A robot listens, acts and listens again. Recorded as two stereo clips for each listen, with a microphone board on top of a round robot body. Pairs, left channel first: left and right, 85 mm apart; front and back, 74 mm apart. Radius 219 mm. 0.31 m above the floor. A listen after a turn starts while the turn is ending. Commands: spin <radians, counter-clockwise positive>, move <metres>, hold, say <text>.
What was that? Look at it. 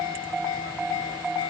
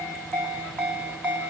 hold
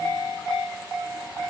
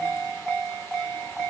hold
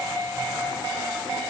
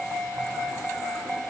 say I can't make out anything.